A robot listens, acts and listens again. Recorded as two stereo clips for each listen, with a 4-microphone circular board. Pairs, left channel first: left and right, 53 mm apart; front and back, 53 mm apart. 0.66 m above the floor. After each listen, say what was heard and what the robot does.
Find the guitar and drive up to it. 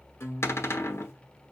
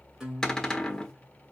The guitar: 110° left. Turn 110° left.
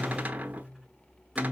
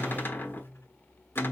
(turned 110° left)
Drive 1.0 m forward.
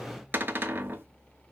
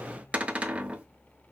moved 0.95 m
Keep listening.
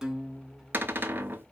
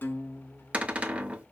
The guitar is now 10° right. Turn 10° right.
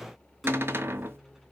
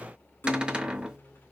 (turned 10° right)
Drive 1.0 m forward.
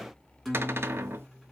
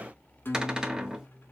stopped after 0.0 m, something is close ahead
Arrived at the guitar, straight ahead.